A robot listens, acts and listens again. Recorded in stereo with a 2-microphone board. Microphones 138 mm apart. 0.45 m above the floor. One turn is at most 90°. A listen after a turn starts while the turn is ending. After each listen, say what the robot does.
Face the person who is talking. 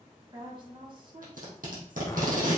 Turn 35° right.
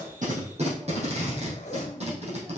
Keep listening.
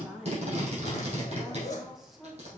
Facing the woman speaking, 2 to 4 m away.